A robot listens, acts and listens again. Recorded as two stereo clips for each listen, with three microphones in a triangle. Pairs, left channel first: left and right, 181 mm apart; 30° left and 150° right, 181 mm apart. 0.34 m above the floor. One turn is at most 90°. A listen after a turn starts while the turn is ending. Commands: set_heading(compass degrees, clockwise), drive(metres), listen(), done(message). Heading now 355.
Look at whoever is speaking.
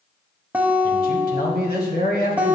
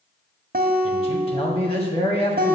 set_heading(275)
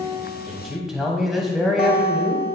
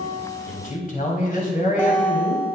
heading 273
done("Found it: a man speaking, straight ahead, 1 to 2 m away.")